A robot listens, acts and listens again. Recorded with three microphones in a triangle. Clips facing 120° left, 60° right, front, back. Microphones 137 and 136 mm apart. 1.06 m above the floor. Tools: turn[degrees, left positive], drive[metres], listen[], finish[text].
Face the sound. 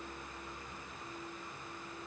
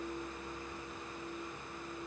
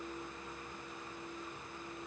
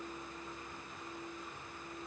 Action: listen[]
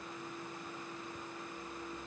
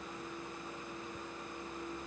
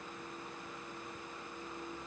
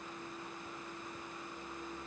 Action: listen[]
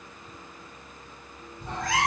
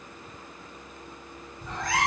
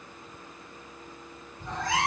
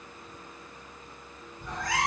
Thought: The cat meowing: 65° left.
Action: turn[65]
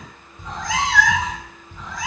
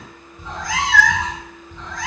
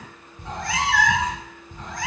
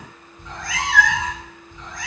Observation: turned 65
Thought: The cat meowing is now 35° left.
Action: turn[35]
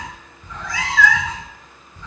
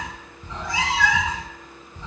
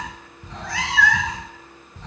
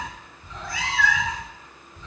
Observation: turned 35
Action: finish[Facing the cat meowing.]